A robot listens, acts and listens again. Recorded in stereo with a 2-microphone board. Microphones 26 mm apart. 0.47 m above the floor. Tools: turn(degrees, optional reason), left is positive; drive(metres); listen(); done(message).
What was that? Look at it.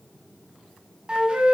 turn(degrees=-40, reason="The flute: about 40° right or 140° right.")
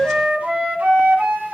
turn(degrees=-100, reason="So it is at 100° right.")
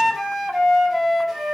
turn(degrees=-10, reason="The flute is now 10° right.")
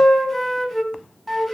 done("Facing the flute.")